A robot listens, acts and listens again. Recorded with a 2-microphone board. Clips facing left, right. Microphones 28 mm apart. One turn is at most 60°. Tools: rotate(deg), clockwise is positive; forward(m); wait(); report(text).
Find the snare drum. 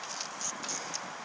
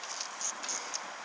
wait()
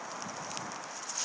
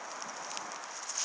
wait()
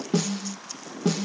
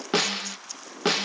rotate(60)
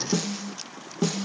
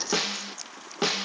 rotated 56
rotate(50)
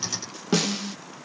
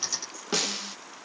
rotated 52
report("Found it: a snare drum, straight ahead.")